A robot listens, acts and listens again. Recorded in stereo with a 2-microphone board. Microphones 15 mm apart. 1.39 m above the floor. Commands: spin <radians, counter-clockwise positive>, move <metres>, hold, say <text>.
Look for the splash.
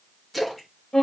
spin 0.52
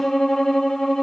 hold
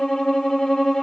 say I heard a splash, but can't make it out now. It was about 30° right or 150° left.